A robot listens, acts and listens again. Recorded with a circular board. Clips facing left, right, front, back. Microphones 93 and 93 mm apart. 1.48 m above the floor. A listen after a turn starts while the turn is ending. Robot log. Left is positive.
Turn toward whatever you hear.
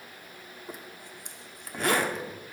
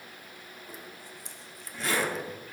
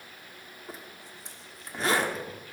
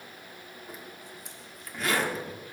note: The zipper: 60° left.
cmd yaw +60
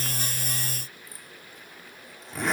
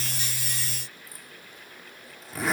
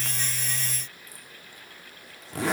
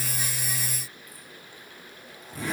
end: Facing the zipper, 1 to 2 m away.